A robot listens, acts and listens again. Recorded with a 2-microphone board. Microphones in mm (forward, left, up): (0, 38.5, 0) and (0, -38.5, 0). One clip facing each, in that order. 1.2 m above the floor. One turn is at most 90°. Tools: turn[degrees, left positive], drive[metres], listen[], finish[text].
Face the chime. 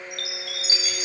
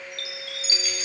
Thought: The chime: about 35° right or 145° right.
Action: turn[-35]
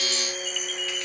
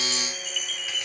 Action: finish[Found it: a chime, straight ahead.]